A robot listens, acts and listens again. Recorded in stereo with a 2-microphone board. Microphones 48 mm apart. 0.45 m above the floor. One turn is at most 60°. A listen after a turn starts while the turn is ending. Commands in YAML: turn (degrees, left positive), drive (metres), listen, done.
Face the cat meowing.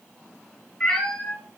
turn: 30
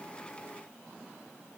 listen: true
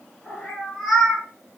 turn: 30
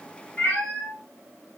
turn: 60
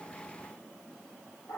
turn: 60
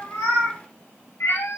turn: 60
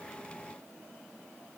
listen: true
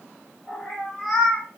done: "Found it: a cat meowing, straight ahead, 2 to 4 m away."